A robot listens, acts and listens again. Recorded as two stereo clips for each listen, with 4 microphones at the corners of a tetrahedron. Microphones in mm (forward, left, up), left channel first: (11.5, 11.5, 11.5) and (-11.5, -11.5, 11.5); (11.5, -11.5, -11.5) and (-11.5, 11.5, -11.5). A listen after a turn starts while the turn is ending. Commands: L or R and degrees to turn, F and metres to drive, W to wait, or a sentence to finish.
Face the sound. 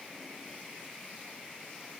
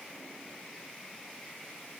W
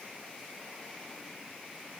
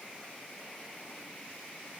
W
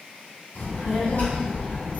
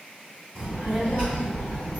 L80
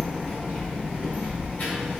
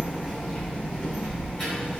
L30
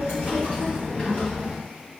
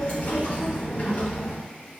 Facing the child speaking, 2 to 4 m away.